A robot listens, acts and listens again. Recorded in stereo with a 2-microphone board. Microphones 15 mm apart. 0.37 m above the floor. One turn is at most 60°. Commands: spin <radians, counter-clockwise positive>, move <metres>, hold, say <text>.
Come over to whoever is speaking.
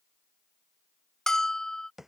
hold
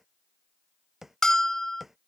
hold
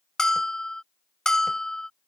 say I can't make out anyone speaking, only a bell and tapping.